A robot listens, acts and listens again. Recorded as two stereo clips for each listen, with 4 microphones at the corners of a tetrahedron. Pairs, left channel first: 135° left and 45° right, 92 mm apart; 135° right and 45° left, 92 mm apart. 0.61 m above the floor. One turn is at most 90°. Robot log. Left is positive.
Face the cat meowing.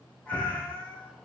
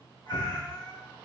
note: The cat meowing: 60° left.
cmd yaw +60
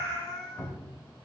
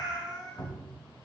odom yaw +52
note: The cat meowing is now 10° left.
cmd yaw +10
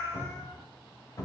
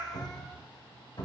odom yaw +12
end: Facing the cat meowing.